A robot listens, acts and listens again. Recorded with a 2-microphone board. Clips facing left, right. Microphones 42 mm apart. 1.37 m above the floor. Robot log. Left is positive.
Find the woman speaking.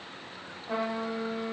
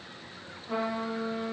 cmd idle
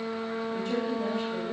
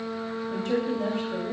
note: The woman speaking: about 70° right or 110° right.
cmd yaw -70
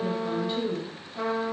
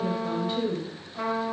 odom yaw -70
end: Found it: a woman speaking, straight ahead.